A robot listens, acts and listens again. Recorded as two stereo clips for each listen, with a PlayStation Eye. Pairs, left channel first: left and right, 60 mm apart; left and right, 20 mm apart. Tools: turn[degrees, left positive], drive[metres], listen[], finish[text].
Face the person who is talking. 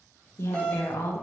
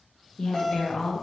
Thought: The woman speaking: about 50° left or 130° left.
Action: turn[50]
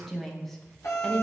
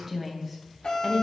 Action: finish[Found it: a woman speaking, straight ahead, 1 to 2 m away.]